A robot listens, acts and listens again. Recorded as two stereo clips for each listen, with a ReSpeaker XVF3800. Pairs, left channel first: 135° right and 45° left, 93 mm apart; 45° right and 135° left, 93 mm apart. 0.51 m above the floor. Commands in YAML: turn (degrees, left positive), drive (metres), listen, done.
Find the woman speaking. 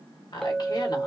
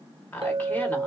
turn: -115
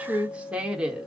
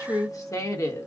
turn: -30
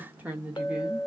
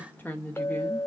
turn: -10
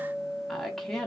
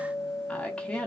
turn: -75
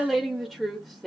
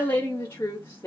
turn: -50
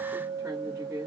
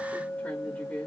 turn: 10
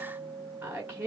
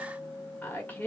done: "Facing the woman speaking, 1 to 2 m away."